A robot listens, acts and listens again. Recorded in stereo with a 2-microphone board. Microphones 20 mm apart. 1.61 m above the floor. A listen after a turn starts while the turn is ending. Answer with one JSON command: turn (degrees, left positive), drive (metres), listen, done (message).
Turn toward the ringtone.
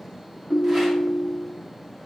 {"turn": 20}
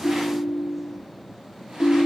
{"turn": 140}
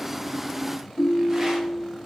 {"turn": 20}
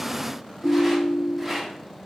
{"done": "Facing the ringtone, under 1 m away."}